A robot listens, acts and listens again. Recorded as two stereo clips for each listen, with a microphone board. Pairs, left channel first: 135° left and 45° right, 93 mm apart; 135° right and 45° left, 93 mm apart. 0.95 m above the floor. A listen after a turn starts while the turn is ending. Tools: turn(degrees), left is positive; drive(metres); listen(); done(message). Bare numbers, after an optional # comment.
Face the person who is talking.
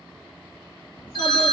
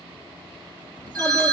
# The child speaking: 155° left.
turn(155)
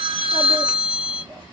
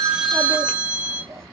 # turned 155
# The child speaking is now 10° right.
turn(-10)
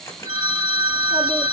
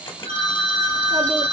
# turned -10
listen()
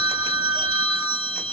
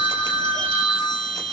listen()
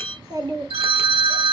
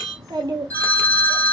done("Facing the child speaking.")